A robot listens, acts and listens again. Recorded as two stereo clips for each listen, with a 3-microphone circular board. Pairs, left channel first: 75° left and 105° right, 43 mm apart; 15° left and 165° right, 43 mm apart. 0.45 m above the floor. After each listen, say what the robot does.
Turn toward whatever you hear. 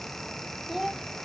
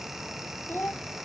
Turn 15° right.
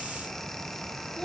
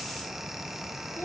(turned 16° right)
Found it: a child speaking, straight ahead.